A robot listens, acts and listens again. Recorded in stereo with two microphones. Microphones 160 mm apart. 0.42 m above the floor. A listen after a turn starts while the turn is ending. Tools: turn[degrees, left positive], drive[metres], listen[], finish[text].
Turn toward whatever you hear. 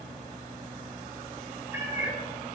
Thought: The cat meowing: about 20° right or 160° right.
Action: turn[-20]
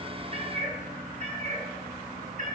Thought: So it is at 125° right.
Action: turn[-125]
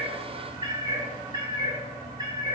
Thought: The cat meowing is now 25° right.
Action: turn[-25]
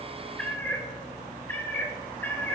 Thought: The cat meowing is now 15° left.
Action: turn[15]
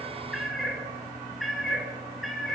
Action: finish[Found it: a cat meowing, straight ahead, 2 to 4 m away.]